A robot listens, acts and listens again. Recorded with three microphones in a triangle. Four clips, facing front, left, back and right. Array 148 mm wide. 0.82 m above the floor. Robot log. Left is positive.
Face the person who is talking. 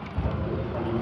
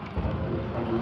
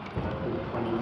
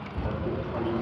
note: The man speaking: 140° right.
cmd yaw -140
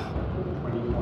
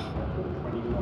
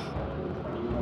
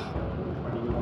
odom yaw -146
end: Found it: a man speaking, straight ahead.